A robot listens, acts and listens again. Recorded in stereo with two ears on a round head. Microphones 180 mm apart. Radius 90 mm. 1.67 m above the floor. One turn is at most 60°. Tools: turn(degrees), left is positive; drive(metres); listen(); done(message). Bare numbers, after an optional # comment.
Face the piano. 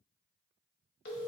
listen()
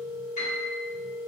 # The piano: about 35° left or 145° left.
turn(35)
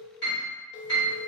# So it is at 100° left.
turn(60)
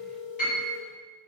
# The piano is now 45° left.
turn(45)
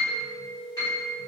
# The piano is now 20° left.
turn(20)
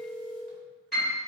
done("Found it: a piano, straight ahead, 1 to 2 m away.")